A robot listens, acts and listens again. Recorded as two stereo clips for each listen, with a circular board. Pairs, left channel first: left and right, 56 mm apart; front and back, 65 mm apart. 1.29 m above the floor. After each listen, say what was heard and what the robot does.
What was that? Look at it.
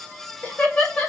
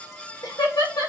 The laughter: 20° left. Turn 20° left.
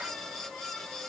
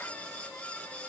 Keep listening.
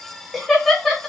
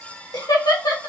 Found it: laughter, straight ahead.